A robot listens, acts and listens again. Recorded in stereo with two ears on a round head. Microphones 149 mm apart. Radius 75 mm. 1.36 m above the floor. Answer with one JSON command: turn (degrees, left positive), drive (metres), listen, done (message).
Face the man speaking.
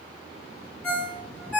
{"listen": true}
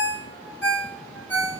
{"listen": true}
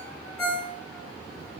{"done": "I can't make out a man speaking to turn to."}